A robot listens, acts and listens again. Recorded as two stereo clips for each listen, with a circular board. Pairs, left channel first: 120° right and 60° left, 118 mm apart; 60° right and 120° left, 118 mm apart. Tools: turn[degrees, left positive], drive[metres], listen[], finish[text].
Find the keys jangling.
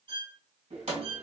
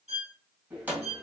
Thought: The keys jangling: 45° left.
Action: turn[45]
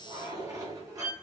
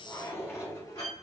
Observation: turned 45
Action: finish[Found it: keys jangling, straight ahead, 1 to 2 m away.]